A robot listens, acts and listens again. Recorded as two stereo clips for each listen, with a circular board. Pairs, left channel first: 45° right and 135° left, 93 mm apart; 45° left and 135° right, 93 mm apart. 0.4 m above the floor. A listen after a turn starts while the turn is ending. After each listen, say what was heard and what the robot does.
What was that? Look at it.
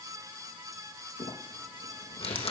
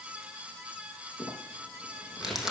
The crumpling: 50° right. Turn 50° right.
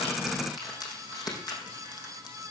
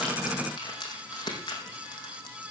Found it: crumpling, straight ahead.